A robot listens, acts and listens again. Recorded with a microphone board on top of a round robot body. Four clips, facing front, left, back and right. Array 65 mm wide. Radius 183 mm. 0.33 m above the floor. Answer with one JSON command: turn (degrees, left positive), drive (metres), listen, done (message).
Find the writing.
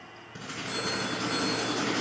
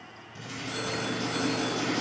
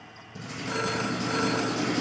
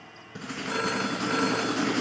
{"turn": -70}
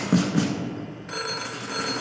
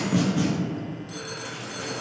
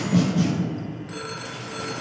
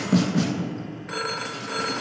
{"turn": -15}
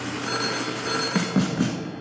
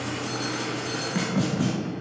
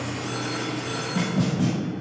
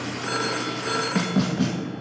{"done": "Facing the writing, 1 to 2 m away."}